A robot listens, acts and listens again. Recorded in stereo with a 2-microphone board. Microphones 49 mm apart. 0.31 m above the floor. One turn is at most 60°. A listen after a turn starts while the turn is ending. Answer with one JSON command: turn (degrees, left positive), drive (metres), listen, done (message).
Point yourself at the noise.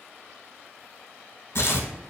{"turn": 55}
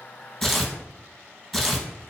{"done": "Facing the tearing paper."}